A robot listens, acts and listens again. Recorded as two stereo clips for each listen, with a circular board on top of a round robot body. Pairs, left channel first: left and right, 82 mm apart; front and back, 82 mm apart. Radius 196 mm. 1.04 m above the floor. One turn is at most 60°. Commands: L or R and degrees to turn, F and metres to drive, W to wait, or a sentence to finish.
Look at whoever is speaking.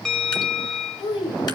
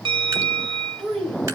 L60
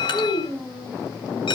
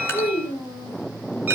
L10
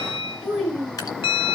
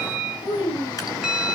Found it: a child speaking, straight ahead, over 4 m away.